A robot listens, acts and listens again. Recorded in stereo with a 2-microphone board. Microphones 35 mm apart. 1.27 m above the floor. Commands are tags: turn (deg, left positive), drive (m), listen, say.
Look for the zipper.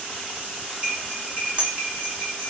<listen/>
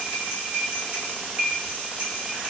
<listen/>
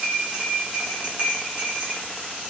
<say>I can't make out a zipper, only cutlery clinking.</say>